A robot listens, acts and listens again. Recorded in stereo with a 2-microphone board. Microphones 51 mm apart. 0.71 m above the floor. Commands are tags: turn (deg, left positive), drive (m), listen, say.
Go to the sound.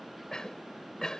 <turn deg="30"/>
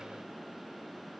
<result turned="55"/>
<listen/>
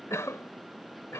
<turn deg="110"/>
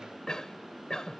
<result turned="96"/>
<turn deg="15"/>
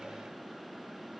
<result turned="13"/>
<listen/>
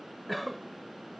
<drive m="1.0"/>
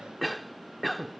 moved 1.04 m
<drive m="1.0"/>
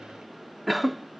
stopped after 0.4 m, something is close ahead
<say>Arrived at the cough, straight ahead.</say>